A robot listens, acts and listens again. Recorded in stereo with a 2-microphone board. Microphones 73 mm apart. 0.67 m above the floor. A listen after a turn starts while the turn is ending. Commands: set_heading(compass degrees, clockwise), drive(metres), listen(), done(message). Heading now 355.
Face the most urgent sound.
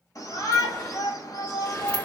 set_heading(300)
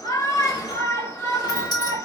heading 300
set_heading(245)
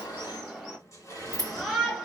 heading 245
done("Facing the shout, 1 to 2 m away.")